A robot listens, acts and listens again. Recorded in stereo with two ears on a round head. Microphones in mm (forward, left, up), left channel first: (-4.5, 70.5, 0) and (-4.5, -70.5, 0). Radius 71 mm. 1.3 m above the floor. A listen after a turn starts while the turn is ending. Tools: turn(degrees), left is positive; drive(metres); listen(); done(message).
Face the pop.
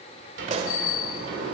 turn(degrees=-45)
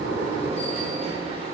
listen()
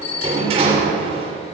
done("I heard a pop, but can't make it out now. It was about straight ahead or 90° right.")